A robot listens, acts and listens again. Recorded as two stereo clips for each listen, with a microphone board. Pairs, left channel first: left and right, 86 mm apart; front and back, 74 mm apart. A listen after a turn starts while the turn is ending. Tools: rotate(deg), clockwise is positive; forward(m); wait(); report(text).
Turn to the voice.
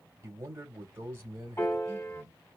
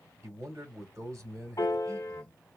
rotate(140)
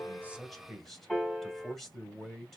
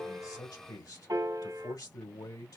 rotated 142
report("Found it: a man speaking, straight ahead, 2 to 4 m away.")